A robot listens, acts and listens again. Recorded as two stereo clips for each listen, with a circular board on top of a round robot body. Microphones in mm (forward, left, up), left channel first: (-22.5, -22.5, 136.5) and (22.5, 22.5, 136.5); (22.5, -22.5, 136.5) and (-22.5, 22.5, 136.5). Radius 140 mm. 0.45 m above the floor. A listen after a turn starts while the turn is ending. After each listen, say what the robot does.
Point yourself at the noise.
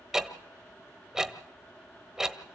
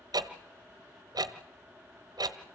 Turn 130° left.
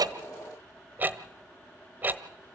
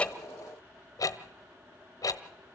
Turn 15° right.
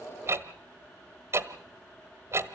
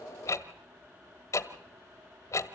Facing the ticking.